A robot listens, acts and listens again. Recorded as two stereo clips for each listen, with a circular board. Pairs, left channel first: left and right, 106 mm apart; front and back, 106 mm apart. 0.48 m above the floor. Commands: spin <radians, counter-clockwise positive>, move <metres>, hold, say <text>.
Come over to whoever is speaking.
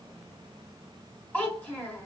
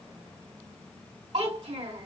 spin 2.88
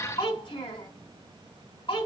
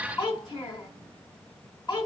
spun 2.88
spin 0.79
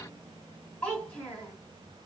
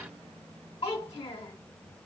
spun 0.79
spin 0.17
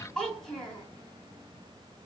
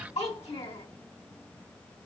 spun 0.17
move 1.0
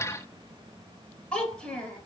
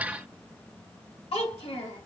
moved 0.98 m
spin 0.17
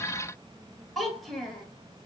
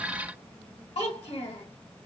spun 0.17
move 1.0
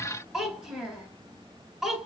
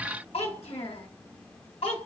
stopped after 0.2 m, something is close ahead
say I am next to the child speaking.